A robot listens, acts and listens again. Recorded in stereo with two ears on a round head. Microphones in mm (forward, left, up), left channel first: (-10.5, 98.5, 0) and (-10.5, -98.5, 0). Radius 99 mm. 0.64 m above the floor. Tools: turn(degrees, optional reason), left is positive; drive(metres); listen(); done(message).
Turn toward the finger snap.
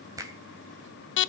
turn(degrees=-15, reason="The finger snap: about 15° right or 165° right.")
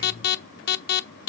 listen()
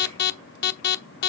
listen()
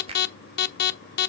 turn(degrees=-155, reason="So it is at 155° right.")
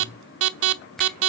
done("Facing the finger snap.")